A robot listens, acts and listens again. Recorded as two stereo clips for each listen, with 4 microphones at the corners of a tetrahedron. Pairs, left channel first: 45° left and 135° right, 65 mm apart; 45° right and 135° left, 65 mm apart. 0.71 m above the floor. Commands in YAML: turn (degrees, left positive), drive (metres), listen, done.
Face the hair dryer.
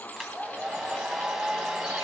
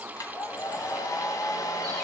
turn: -50
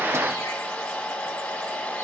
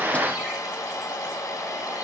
turn: -20
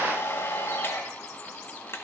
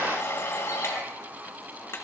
done: "Found it: a hair dryer, straight ahead, 1 to 2 m away."